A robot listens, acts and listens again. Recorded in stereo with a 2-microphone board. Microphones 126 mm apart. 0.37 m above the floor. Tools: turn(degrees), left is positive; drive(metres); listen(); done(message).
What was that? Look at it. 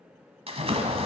turn(degrees=-55)
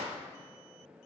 turn(degrees=-70)
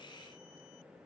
done("Facing where the splash came from. I can't hear it now.")